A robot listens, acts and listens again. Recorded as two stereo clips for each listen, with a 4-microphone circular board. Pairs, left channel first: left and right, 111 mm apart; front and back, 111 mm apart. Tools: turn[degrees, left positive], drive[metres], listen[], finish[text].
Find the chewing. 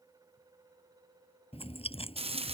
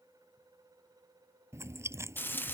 Thought: The chewing: 115° left.
Action: turn[115]
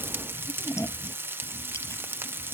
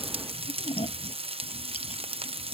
Thought: The chewing is now 25° left.
Action: turn[25]
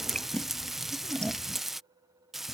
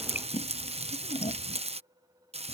Thought: The chewing is now 10° left.
Action: turn[10]
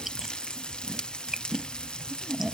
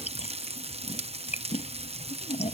Action: finish[Found it: chewing, straight ahead.]